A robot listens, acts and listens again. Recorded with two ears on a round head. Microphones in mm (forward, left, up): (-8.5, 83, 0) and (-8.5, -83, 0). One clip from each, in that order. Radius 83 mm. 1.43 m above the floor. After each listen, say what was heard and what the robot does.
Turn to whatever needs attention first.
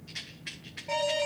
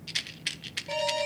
Turn 30° left.
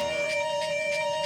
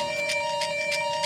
So it is at 30° right. Turn 30° right.
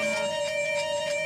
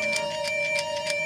Facing the alarm, 2 to 4 m away.